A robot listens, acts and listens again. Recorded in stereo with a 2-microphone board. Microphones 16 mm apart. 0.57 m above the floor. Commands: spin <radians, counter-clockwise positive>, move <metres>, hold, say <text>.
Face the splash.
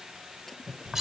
spin 0.26
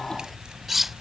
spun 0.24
hold
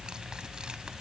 say I heard a splash, but can't make it out now. It was about straight ahead or 150° left.